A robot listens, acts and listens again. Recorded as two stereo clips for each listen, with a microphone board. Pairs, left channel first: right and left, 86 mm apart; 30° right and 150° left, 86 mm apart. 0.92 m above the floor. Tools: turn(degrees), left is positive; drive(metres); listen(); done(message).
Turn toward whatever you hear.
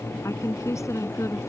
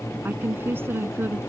turn(degrees=-145)
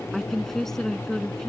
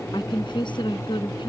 done("Found it: a woman speaking, straight ahead.")